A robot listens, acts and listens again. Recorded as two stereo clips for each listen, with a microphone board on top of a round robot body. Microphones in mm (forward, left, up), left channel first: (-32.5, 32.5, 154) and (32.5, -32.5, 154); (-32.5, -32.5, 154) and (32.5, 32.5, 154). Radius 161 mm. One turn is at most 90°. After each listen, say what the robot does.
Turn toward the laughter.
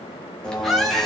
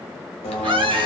Turn 45° left.
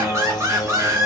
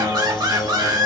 Turn 10° left.
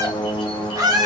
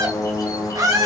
Facing the laughter.